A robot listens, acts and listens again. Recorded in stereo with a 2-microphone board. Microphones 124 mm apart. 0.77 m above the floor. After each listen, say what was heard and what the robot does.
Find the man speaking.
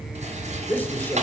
Turn 30° left.
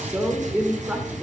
So it is at 15° right. Turn 15° right.
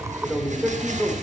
Facing the man speaking, 2 to 4 m away.